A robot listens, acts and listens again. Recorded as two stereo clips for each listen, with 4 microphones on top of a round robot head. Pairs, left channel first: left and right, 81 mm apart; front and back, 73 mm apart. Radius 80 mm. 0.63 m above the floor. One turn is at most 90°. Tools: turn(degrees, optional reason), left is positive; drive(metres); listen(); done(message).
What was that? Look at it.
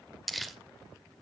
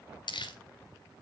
done("Facing the crumpling, 2 to 4 m away.")